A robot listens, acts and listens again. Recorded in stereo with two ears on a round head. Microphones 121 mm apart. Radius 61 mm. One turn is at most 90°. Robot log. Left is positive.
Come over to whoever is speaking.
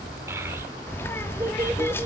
note: The child speaking: about 20° right or 160° right.
cmd yaw -20
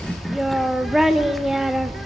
cmd fwd 1.0
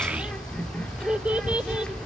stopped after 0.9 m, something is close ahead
note: The child speaking is now 10° right.
cmd yaw -10
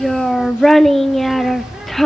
end: I am next to the child speaking.